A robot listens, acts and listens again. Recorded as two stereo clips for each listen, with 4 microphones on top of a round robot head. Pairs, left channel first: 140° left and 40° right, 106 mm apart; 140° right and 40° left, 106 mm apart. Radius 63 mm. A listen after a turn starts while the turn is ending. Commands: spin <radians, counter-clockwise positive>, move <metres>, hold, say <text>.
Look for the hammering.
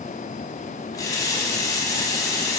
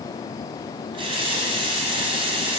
hold
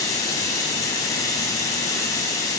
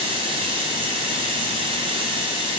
hold
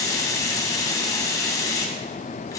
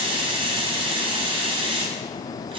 say I can't make out hammering, only a running tap.